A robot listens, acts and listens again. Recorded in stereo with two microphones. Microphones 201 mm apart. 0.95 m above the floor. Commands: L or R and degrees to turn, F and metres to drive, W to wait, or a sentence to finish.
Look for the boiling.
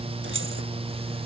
W
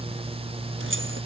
W
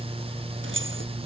I can't make out boiling to turn to.